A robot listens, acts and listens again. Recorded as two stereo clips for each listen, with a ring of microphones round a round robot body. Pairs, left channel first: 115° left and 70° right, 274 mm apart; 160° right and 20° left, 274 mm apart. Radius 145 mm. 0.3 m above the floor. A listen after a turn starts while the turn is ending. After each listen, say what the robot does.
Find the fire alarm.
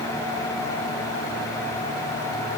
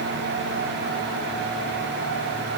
Keep listening.
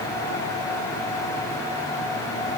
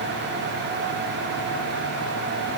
Keep listening.
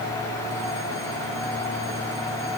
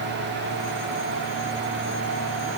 I can't make out a fire alarm to turn to.